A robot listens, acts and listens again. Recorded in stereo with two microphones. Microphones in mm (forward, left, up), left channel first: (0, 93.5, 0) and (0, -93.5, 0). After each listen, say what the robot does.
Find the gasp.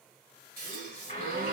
Turn 55° right.
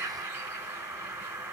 Keep listening.
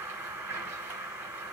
I heard a gasp, but can't make it out now. It was about straight ahead or 70° right.